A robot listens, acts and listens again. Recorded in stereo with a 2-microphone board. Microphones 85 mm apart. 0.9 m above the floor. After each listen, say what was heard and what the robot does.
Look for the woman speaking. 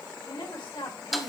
Turn 90° left.
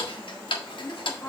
So it is at 25° left. Turn 25° left.
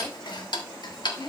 The woman speaking is now 10° left. Turn 10° left.
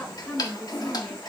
The woman speaking is now 10° left. Turn 10° left.
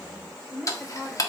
Facing the woman speaking, 2 to 4 m away.